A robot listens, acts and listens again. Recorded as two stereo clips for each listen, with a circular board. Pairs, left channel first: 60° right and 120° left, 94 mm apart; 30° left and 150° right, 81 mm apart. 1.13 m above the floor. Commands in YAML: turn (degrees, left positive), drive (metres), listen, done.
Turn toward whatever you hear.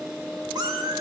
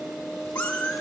turn: 105
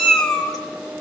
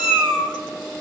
turn: 25
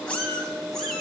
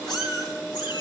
turn: 25
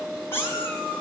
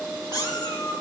done: "Found it: a cat meowing, straight ahead, 2 to 4 m away."